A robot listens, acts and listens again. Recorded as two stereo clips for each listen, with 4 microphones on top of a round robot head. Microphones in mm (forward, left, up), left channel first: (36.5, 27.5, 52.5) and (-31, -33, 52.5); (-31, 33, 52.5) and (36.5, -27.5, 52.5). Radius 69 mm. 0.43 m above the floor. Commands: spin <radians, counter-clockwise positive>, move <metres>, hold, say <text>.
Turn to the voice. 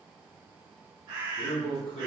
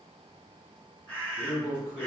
spin 0.70
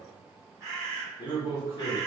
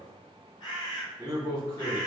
say Facing the man speaking, 1 to 2 m away.